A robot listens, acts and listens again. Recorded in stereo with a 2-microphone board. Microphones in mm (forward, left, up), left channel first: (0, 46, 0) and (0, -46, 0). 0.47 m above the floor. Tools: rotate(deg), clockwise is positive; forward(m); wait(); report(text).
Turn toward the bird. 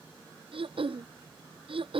wait()
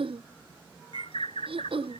rotate(-90)
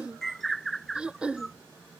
report("Found it: a bird, straight ahead.")